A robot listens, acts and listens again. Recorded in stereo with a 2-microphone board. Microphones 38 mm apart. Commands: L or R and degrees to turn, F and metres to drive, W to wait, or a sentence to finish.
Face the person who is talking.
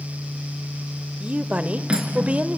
R35
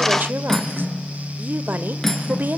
R105
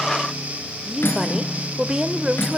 R20
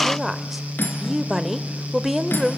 Facing the woman speaking.